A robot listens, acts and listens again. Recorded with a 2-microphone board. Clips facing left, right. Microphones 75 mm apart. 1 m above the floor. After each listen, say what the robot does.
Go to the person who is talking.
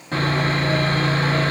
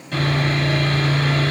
Keep listening.
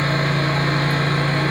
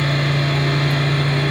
Keep listening.
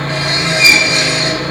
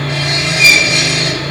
I can't make out anyone speaking to turn to.